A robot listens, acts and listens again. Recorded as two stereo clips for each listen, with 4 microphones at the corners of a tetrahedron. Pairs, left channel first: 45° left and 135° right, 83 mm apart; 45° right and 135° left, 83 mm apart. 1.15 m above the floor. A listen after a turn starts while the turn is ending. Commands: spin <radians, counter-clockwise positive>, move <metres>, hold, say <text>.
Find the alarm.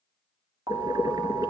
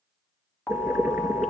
spin -2.09
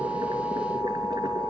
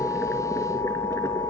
spin -0.96
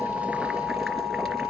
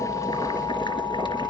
say Facing the alarm, 2 to 4 m away.